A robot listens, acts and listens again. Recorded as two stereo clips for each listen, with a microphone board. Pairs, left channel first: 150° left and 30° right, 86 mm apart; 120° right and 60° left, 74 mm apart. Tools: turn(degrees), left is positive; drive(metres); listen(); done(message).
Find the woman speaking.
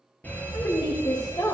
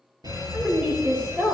turn(degrees=125)
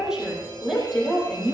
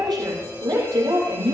turn(degrees=55)
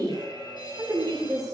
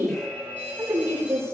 turn(degrees=10)
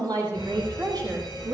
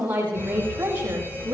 done("Found it: a woman speaking, straight ahead, over 4 m away.")